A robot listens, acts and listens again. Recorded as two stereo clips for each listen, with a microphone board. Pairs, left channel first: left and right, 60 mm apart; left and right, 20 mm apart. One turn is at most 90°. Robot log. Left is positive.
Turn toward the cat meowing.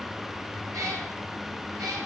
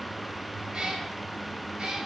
note: The cat meowing: about 75° right or 105° right.
cmd yaw -75
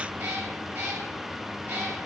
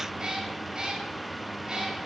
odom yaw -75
note: So it is at 30° right.
cmd yaw -30
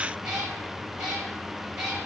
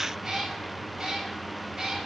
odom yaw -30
note: The cat meowing is now 15° right.
cmd yaw -15
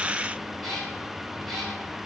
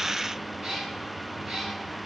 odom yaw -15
end: Found it: a cat meowing, straight ahead, over 4 m away.